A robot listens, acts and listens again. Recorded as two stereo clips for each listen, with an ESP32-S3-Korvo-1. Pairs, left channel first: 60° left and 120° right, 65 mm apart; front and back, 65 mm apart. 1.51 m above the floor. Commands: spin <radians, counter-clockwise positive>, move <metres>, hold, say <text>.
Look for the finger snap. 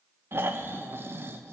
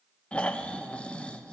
hold
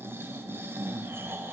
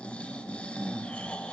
hold
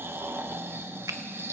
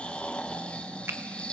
spin -2.36
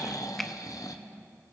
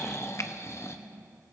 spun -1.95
spin -0.44
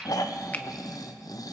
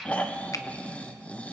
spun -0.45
hold
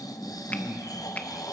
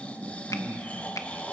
say Facing where the finger snap came from. I can't hear it now.